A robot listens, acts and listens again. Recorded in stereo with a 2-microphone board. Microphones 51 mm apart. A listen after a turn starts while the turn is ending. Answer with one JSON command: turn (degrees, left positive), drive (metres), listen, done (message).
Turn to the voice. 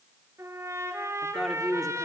{"turn": 30}
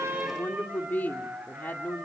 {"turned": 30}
{"turn": 145}
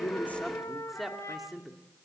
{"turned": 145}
{"done": "Facing the woman speaking, 2 to 4 m away."}